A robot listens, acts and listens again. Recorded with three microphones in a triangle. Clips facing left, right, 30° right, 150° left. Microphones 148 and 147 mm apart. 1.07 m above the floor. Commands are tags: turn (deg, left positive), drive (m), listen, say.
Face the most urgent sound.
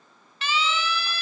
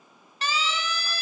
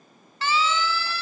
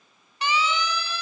<turn deg="-140"/>
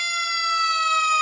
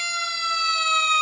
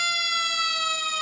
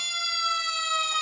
<turn deg="-25"/>
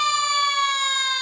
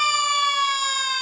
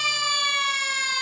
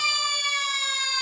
<say>Found it: a siren, straight ahead.</say>